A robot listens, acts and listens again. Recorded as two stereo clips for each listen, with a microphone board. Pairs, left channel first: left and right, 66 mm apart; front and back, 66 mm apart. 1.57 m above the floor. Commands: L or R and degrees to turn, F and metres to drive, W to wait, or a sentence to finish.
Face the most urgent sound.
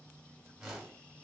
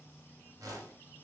W
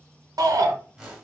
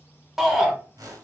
R95
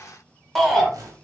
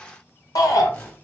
Facing the shout, 1 to 2 m away.